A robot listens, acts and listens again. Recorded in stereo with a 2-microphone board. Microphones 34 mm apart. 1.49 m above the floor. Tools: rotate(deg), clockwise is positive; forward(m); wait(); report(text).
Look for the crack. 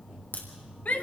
rotate(-70)
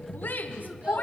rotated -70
wait()
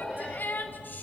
report("I heard a crack, but can't make it out now. It was about straight ahead or 40° left.")